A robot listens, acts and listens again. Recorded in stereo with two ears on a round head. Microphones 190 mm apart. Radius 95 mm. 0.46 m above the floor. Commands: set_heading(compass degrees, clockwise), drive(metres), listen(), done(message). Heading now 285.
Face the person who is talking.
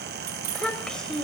set_heading(255)
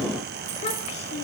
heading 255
set_heading(110)
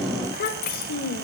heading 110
set_heading(65)
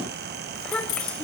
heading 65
done("Facing the child speaking, 1 to 2 m away.")